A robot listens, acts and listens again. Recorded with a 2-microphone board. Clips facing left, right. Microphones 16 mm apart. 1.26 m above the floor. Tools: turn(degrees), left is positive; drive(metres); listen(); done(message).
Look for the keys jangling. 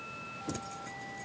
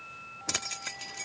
turn(degrees=-70)
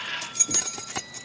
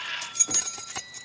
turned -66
turn(degrees=15)
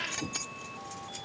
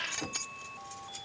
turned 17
done("Found it: keys jangling, straight ahead.")